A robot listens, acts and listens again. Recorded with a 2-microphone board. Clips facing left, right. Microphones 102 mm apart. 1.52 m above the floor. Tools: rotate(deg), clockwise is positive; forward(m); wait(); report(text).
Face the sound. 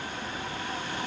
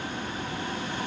wait()
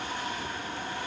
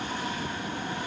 wait()
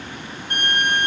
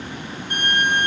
rotate(-50)
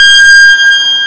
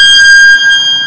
rotate(-70)
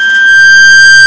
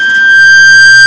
report("Found it: a violin, straight ahead, under 1 m away.")